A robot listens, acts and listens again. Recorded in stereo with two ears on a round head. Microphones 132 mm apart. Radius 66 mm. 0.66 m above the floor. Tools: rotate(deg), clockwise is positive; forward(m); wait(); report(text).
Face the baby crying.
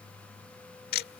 wait()
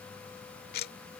wait()
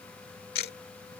report("I can't make out a baby crying, only ticking.")